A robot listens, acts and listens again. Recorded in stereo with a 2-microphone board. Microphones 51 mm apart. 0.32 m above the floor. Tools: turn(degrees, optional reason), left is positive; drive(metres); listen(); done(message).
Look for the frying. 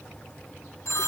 listen()
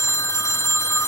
listen()
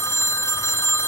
done("I can't make out frying, only a phone ringing.")